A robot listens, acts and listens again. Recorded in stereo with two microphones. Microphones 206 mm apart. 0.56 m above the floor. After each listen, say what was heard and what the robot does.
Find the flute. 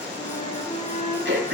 The flute: about 30° left or 150° left. Turn 30° left.
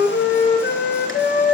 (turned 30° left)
So it is at 120° left. Turn 120° left.
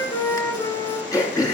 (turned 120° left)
The flute is now 15° left. Turn 15° left.
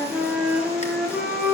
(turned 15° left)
Found it: a flute, straight ahead.